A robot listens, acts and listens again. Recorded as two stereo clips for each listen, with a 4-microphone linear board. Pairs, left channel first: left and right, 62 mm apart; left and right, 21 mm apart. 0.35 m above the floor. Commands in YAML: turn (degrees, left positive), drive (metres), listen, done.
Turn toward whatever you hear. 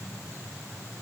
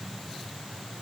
listen: true
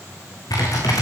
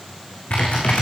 turn: 75
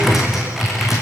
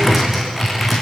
done: "Found it: typing on a keyboard, straight ahead, over 4 m away."